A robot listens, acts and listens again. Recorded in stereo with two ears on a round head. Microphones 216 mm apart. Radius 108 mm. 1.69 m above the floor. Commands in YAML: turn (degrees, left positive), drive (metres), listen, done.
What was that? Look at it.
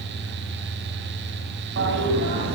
turn: -50
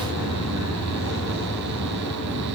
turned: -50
turn: -75
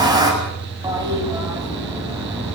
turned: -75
turn: -15
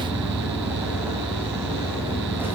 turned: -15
turn: -10
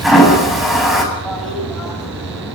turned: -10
done: "Found it: a toilet flushing, straight ahead, over 4 m away."